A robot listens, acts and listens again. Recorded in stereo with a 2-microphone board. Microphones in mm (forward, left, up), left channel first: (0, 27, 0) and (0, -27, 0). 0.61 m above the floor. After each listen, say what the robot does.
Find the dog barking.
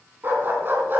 Turn 40° right.
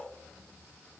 Keep listening.
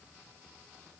Keep listening.
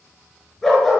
Facing the dog barking, over 4 m away.